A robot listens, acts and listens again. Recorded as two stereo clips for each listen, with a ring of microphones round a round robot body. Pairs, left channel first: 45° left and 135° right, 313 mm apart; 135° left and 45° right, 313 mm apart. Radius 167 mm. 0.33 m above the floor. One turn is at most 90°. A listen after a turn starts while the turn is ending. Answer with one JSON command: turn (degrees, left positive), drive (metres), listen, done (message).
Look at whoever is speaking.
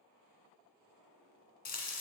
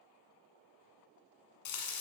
{"listen": true}
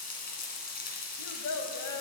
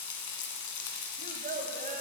{"turn": 20}
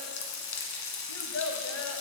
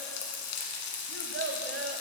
{"done": "Found it: a child speaking, straight ahead."}